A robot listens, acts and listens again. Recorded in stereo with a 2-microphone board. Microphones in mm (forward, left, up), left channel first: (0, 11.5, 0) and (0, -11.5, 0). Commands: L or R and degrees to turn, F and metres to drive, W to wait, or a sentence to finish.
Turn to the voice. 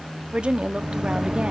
R45
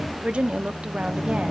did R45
R80
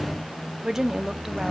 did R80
R25
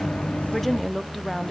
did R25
Facing the woman speaking.